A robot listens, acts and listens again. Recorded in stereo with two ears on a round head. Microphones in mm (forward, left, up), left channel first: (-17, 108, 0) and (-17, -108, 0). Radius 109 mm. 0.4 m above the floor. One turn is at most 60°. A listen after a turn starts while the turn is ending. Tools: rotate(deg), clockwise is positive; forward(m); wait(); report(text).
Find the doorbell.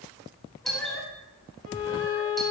rotate(-30)
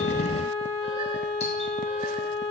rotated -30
wait()
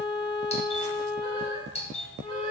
rotate(-60)
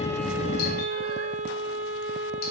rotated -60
rotate(-60)
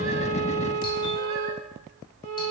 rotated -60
rotate(-30)
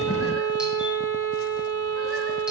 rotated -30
report("I heard a doorbell from this way, but can't make it out now.")